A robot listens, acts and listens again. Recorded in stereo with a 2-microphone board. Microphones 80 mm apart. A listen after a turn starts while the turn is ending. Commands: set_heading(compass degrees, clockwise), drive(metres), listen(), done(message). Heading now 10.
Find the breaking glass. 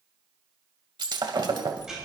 set_heading(80)
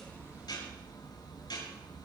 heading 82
listen()
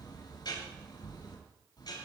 done("I heard breaking glass, but can't make it out now. It was about straight ahead or 35° right.")